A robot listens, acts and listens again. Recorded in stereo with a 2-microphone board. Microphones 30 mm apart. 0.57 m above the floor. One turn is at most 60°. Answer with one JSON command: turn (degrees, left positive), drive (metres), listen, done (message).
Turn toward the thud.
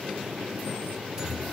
{"listen": true}
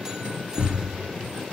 {"turn": -60}
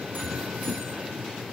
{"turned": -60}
{"listen": true}
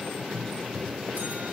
{"done": "I heard a thud, but can't make it out now. It was about straight ahead or 60° right."}